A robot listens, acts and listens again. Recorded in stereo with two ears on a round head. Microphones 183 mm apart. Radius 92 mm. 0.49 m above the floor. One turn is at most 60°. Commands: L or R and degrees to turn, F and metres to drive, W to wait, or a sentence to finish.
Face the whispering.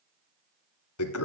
W
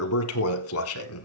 W
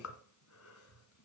I can't make out whispering to turn to.